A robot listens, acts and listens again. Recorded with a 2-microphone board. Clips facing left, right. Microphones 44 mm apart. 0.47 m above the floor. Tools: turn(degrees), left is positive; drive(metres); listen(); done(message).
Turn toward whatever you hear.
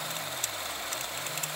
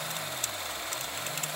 listen()
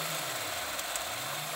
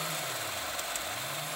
listen()
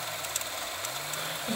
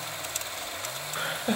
turn(degrees=-50)
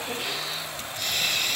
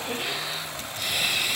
turn(degrees=-10)
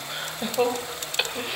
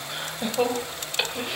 done("Facing the laughter.")